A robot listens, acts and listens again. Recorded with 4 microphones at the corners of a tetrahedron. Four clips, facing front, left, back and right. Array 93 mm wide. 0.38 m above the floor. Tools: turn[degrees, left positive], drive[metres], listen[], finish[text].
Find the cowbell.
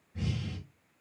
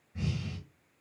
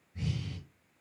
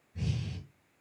Action: listen[]
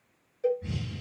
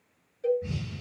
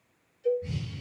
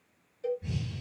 Thought: The cowbell: 15° left.
Action: turn[15]
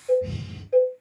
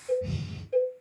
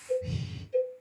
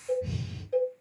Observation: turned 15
Action: finish[Facing the cowbell.]